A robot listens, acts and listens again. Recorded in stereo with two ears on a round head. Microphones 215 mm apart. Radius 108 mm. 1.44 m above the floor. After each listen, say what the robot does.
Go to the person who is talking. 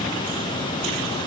Keep listening.
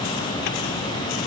Keep listening.
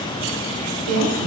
Turn 70° right.
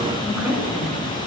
Drive 1.0 m forward.
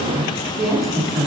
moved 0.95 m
Drive 1.0 m forward.
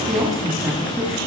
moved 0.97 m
Drive 1.0 m forward.
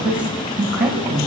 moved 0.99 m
Drive 1.0 m forward.
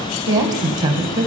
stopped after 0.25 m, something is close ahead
Turn 15° right.
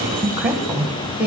Arrived at the woman speaking, straight ahead.